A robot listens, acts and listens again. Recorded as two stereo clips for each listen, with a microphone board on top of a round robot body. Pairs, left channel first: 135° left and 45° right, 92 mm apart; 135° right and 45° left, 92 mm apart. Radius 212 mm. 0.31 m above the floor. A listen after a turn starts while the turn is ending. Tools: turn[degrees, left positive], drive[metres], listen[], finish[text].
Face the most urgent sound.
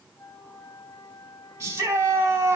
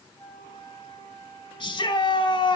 Thought: The shout: 105° right.
Action: turn[-105]
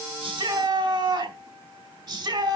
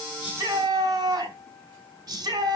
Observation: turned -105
Action: finish[Found it: a shout, straight ahead, over 4 m away.]